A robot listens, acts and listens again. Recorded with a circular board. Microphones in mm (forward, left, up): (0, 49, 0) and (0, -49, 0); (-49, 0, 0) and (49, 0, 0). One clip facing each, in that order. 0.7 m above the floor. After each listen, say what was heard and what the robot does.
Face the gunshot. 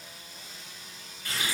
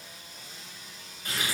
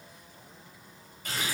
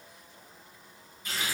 Keep listening.
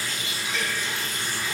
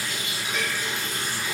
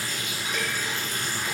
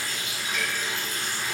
Keep listening.
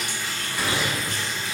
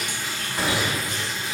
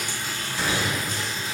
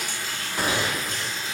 The gunshot: 35° right. Turn 35° right.
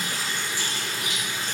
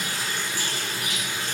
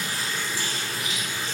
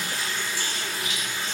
Facing where the gunshot came from. I can't hear it now.